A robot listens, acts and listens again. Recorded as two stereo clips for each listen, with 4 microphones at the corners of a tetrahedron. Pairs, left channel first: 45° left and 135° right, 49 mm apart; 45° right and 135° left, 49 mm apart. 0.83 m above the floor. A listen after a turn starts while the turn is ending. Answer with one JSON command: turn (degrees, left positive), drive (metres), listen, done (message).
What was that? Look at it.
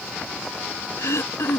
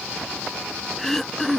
{"turn": 40}
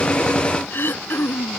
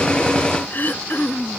{"done": "Facing the throat clearing."}